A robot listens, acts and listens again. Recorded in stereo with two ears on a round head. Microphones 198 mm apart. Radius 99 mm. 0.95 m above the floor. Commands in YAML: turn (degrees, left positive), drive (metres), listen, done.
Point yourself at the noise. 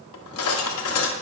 turn: 70
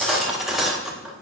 done: "Found it: cutlery clinking, straight ahead, 1 to 2 m away."